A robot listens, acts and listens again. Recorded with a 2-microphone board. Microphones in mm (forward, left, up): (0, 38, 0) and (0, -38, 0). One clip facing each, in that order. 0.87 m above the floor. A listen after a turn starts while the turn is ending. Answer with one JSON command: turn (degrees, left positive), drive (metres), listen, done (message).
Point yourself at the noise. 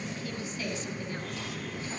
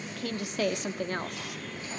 {"turn": -65}
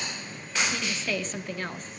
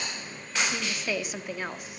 {"turn": -10}
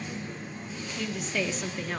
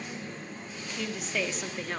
{"done": "Facing the woman speaking."}